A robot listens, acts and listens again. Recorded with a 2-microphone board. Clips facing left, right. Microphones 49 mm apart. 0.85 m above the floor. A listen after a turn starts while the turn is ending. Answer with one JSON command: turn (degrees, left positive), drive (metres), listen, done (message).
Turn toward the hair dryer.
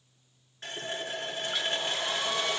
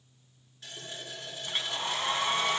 {"turn": -35}
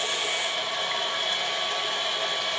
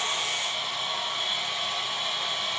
{"done": "Facing the hair dryer, 2 to 4 m away."}